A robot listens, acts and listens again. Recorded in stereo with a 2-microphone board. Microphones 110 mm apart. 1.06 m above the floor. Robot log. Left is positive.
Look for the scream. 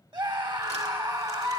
note: The scream: about 45° right or 135° right.
cmd yaw -45
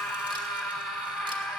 end: Found it: a scream, straight ahead.